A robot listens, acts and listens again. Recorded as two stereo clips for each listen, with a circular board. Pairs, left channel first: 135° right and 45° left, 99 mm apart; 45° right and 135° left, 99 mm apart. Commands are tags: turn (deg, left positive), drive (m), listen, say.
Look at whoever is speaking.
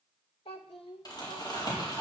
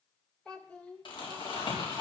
<turn deg="-120"/>
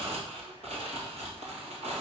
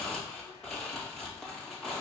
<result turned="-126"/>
<listen/>
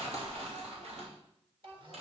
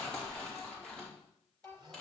<turn deg="30"/>
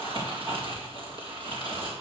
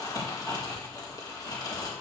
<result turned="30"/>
<listen/>
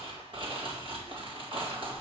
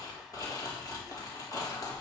<listen/>
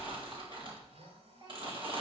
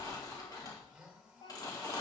<say>Facing the child speaking, over 4 m away.</say>